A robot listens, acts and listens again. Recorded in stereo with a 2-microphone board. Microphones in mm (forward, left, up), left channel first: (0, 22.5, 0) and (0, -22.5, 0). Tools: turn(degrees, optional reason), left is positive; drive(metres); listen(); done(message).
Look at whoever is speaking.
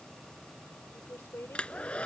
turn(degrees=65, reason="The woman speaking: about 65° left or 115° left.")
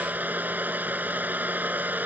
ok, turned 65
listen()
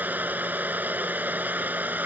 listen()
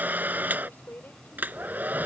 turn(degrees=50, reason="So it is at 50° left.")
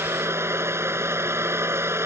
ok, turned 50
listen()
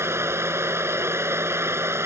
listen()
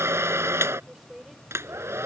turn(degrees=-10, reason="The woman speaking is now 10° right.")
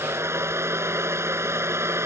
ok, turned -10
listen()
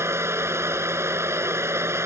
listen()
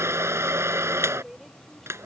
done("Facing the woman speaking.")